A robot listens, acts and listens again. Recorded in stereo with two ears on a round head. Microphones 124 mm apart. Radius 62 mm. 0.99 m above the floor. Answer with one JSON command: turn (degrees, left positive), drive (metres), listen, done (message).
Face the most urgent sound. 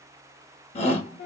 {"turn": 50}
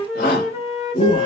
{"turn": 80}
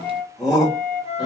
{"done": "Facing the shout."}